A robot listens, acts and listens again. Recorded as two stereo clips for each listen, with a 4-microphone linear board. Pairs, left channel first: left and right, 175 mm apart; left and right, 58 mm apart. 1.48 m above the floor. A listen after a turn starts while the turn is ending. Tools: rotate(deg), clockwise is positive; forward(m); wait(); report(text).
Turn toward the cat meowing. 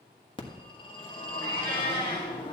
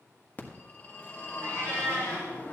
rotate(65)
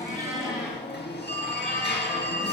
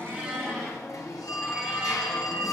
wait()
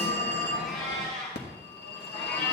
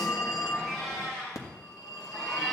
report("Facing the cat meowing.")